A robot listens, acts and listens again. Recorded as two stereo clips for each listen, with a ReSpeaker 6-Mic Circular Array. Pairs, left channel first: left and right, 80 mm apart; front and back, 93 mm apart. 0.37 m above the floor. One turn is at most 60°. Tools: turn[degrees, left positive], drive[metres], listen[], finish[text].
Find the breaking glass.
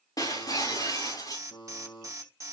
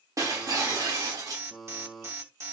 Thought: The breaking glass: 125° left.
Action: turn[60]
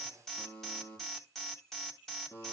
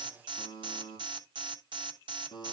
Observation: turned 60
Thought: Nothing new. It was at 65° left.
Action: turn[60]
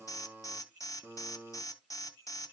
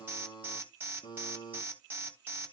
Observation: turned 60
Action: finish[I heard breaking glass from this way, but can't make it out now.]